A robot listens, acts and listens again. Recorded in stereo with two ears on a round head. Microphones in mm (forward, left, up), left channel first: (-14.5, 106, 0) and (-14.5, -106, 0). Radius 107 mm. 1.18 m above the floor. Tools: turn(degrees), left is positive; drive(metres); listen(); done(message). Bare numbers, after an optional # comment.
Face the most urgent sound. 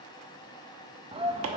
# The shout: about 25° right or 155° right.
turn(-25)
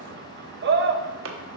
# So it is at 135° right.
turn(-135)
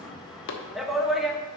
done("Facing the shout, 1 to 2 m away.")